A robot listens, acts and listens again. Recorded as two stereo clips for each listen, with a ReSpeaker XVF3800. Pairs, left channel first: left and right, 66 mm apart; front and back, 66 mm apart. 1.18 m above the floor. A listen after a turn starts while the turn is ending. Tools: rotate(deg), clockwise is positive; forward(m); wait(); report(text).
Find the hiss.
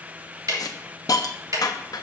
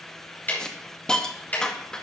rotate(-80)
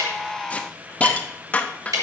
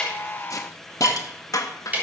rotate(-25)
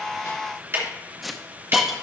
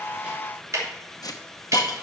report("Found it: a hiss, straight ahead.")